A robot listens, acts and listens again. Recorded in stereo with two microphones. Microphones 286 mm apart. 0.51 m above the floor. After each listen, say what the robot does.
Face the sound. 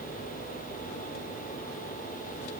Keep listening.
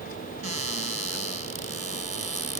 Turn 60° right.
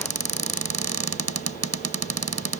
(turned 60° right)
Turn 60° right.
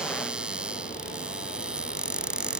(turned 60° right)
Facing the cupboard door.